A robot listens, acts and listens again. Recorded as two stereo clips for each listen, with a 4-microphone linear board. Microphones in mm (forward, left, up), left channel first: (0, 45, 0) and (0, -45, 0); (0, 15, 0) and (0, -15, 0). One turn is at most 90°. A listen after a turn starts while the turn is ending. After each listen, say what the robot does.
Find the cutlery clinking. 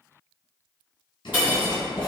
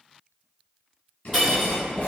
Turn 20° right.
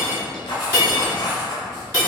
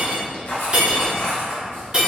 Turn 90° right.
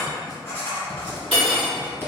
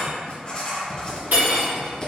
Turn 80° right.
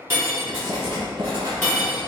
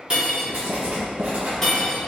Turn 20° left.
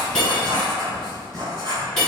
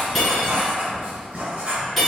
Found it: cutlery clinking, straight ahead.